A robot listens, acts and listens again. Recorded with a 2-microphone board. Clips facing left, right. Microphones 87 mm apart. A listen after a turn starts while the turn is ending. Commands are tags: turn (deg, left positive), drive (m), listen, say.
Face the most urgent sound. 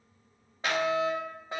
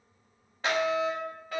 <turn deg="25"/>
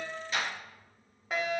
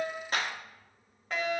<turn deg="10"/>
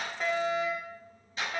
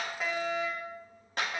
<say>Found it: a fire alarm, straight ahead.</say>